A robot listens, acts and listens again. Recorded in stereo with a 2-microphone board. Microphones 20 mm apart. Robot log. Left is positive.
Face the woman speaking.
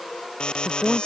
note: The woman speaking: about 40° right or 140° right.
cmd yaw -40
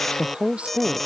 note: So it is at 100° right.
cmd yaw -100
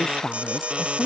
end: Facing the woman speaking.